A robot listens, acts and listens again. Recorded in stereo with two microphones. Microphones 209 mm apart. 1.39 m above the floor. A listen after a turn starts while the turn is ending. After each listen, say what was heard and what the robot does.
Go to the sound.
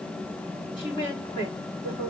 The woman speaking: about 25° left or 155° left. Turn 25° left.
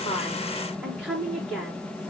Drive 1.0 m forward.
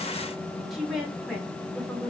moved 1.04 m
Drive 1.0 m forward.
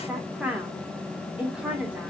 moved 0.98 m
Drive 1.0 m forward.
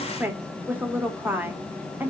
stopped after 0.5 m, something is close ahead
The woman speaking is now 10° right. Turn 10° right.
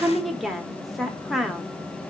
Arrived at the woman speaking, straight ahead.